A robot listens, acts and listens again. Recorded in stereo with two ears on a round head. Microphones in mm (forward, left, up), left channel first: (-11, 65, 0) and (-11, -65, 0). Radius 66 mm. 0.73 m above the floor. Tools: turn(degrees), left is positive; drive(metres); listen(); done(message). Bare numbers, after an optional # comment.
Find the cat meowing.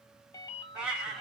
turn(-30)
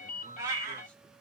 # So it is at 160° right.
turn(-160)
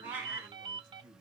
# The cat meowing is now 15° right.
turn(-15)
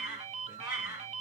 # The cat meowing is now 10° right.
turn(-10)
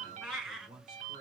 done("Facing the cat meowing.")